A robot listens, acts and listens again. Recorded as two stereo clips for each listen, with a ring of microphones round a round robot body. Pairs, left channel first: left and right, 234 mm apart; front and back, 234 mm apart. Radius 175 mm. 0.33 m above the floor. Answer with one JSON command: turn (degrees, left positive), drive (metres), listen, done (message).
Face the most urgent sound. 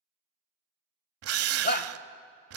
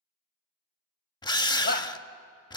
{"turn": 50}
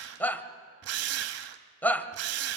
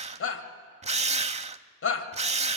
{"turn": 10}
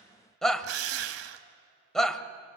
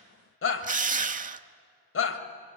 {"done": "Facing the shout, 1 to 2 m away."}